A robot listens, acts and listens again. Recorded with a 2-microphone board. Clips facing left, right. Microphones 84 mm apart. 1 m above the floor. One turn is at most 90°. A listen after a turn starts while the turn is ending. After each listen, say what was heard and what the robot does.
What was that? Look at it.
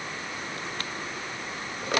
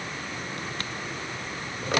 Keep listening.
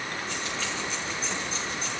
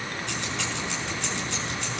The keys jangling: about 70° right or 110° right. Turn 70° right.
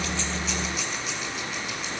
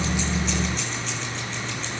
So it is at 10° left. Turn 10° left.
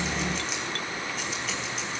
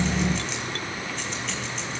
Keep listening.
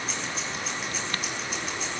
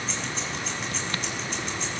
Found it: keys jangling, straight ahead, over 4 m away.